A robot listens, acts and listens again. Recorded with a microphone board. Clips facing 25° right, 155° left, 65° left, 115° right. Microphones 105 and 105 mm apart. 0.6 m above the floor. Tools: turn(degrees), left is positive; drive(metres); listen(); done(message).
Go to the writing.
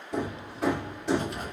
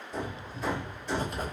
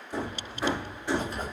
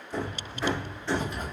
turn(degrees=115)
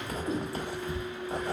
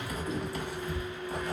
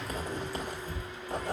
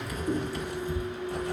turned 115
turn(degrees=35)
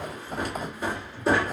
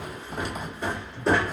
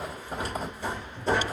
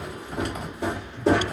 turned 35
turn(degrees=15)
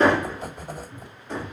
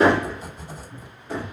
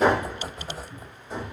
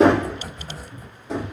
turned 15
turn(degrees=10)
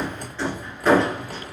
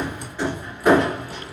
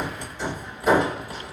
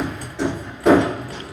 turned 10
drive(metres=1.0)
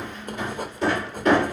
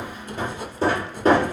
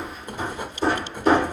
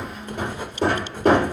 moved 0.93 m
drive(metres=1.0)
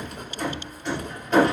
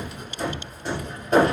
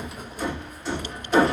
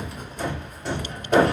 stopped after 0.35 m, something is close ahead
turn(degrees=-10)
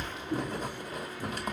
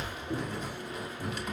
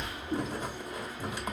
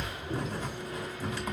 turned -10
done("I am next to the writing.")